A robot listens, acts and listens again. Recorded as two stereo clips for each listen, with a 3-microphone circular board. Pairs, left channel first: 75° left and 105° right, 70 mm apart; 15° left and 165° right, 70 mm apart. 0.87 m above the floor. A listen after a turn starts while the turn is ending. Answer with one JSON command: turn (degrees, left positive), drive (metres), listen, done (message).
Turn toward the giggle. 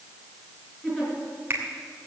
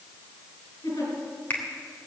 {"done": "Found it: a giggle, straight ahead, over 4 m away."}